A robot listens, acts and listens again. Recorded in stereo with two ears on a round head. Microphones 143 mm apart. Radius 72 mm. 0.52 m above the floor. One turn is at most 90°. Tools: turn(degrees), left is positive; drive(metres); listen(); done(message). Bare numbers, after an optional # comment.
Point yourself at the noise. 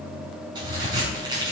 # The crack: about 25° right or 155° right.
turn(-25)
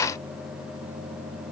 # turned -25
listen()
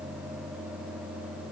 done("I heard a crack, but can't make it out now. It was about straight ahead or 130° right.")